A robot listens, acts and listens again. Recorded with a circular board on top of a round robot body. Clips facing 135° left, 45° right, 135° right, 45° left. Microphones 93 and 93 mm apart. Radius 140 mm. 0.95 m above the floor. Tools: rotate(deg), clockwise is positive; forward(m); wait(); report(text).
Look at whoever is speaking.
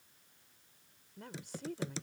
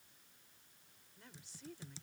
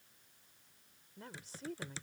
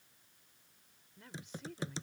rotate(-170)
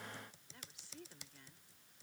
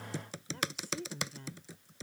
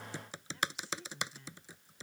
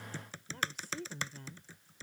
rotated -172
report("Found it: a woman speaking, straight ahead.")